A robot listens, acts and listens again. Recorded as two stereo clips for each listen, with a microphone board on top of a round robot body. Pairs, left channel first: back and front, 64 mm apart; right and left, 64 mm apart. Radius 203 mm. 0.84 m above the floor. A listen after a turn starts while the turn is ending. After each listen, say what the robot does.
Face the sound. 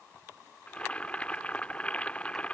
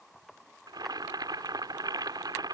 Turn 105° left.
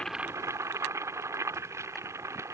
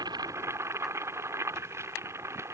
Turn 45° left.
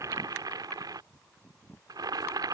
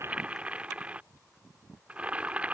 Turn 20° left.
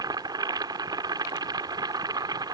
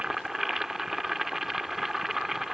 Facing the boiling.